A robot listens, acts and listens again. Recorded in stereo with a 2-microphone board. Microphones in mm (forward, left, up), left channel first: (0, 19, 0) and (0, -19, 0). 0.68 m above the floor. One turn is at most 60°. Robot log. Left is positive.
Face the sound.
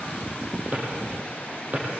note: The drawer: about 40° right or 140° right.
cmd yaw -40
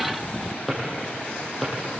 end: Facing the drawer.